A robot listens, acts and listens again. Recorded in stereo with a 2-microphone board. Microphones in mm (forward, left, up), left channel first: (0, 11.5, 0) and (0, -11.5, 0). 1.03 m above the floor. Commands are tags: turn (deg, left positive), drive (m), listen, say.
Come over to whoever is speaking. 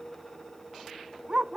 <listen/>
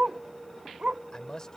<turn deg="25"/>
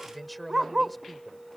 <drive m="1.0"/>
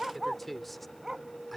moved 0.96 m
<drive m="1.0"/>
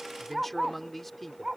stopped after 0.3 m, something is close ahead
<say>Blocked. The man speaking is further on, straight ahead.</say>